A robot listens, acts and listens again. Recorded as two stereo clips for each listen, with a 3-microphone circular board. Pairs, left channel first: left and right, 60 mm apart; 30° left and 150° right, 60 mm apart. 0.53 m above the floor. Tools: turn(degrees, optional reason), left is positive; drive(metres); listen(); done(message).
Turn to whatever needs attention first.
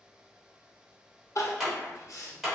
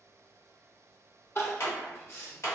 turn(degrees=70, reason="The crying: 70° left.")
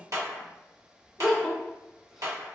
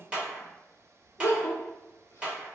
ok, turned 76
done("Facing the crying, under 1 m away.")